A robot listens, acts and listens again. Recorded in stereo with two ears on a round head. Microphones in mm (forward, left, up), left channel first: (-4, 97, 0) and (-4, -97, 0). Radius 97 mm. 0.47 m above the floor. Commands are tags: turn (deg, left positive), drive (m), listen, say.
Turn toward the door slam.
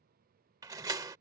<turn deg="-15"/>
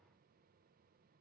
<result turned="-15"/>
<listen/>
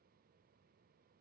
<say>I heard a door slam, but can't make it out now. It was about straight ahead or 150° right.</say>